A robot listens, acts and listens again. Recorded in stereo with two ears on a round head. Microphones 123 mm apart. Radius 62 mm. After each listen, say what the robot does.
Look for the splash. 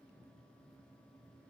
Keep listening.
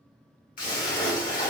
Turn 70° left.
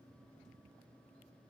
Keep listening.
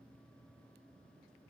I heard a splash, but can't make it out now. It was about straight ahead or 40° left.